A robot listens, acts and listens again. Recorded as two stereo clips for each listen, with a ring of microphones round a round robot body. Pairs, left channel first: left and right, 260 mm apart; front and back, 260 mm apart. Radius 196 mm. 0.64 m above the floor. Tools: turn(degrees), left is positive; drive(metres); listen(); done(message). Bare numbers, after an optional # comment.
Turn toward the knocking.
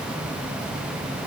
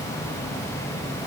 listen()
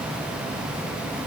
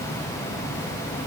listen()
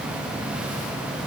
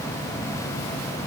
done("I can't make out knocking to turn to.")